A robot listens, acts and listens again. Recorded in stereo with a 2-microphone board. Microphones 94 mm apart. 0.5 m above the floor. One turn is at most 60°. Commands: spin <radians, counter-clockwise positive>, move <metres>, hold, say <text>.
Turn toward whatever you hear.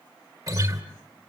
spin -0.70
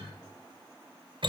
spin -1.05
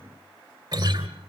spin -0.87
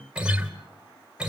spin -0.17
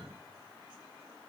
hold
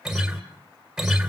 say Found it: a guitar, straight ahead, 2 to 4 m away.